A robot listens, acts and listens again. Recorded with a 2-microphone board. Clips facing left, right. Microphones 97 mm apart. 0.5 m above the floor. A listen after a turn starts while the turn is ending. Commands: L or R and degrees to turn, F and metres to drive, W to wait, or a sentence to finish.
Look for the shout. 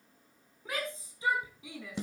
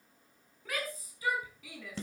L25
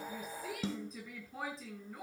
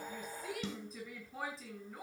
Facing the shout.